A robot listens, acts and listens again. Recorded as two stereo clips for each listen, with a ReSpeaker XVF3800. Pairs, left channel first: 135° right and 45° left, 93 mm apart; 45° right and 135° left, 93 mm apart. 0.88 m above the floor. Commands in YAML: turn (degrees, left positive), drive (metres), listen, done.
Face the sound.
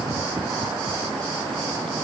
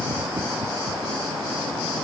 listen: true
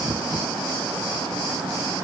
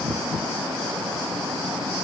listen: true
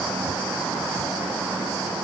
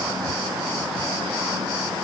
done: "I can't make out anything."